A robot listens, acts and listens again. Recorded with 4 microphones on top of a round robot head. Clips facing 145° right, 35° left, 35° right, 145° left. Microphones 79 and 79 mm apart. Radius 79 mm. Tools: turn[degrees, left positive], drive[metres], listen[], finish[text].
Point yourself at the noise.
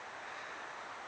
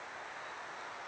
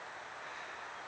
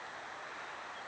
Action: listen[]
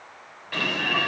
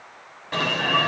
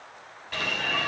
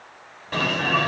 Thought: The alarm: 95° left.
Action: turn[95]
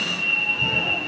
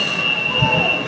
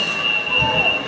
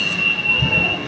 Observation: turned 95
Thought: The alarm is now 25° left.
Action: turn[25]
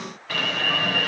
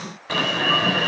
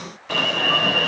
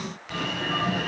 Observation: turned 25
Thought: The alarm is now 30° right.
Action: turn[-30]
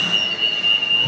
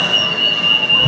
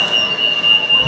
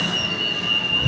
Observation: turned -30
Action: finish[Found it: an alarm, straight ahead, over 4 m away.]